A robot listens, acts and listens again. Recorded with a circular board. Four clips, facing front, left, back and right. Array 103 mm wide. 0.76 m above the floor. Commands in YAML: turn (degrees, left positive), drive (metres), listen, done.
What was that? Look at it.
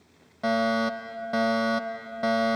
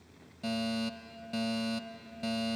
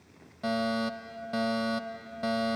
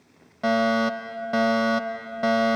turn: -65
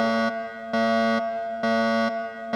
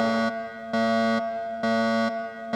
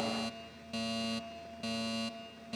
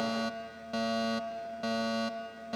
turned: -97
turn: 30
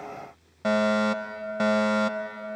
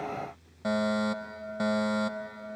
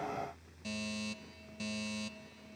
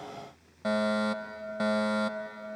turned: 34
done: "Facing the fire alarm."